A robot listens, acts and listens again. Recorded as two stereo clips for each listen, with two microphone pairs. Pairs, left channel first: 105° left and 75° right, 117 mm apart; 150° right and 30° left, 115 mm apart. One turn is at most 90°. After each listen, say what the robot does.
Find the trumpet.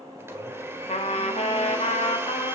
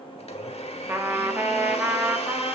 Turn 90° left.
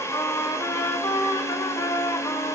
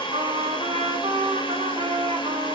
Turn 55° left.
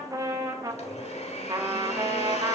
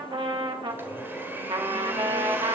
Turn 15° right.
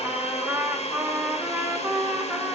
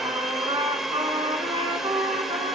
Found it: a trumpet, straight ahead.